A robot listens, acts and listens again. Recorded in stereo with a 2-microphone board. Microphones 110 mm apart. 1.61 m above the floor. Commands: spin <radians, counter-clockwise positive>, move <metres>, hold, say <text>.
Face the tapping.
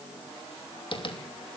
spin 0.87
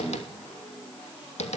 spin 1.48
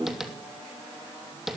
say Facing the tapping, 2 to 4 m away.